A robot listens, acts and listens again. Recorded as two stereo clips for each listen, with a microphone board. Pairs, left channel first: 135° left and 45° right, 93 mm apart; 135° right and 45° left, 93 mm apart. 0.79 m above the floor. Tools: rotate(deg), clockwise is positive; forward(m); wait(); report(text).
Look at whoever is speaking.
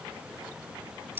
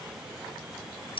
wait()
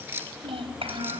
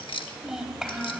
rotate(40)
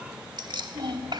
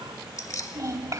rotate(10)
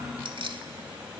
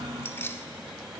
report("Facing the child speaking, 2 to 4 m away.")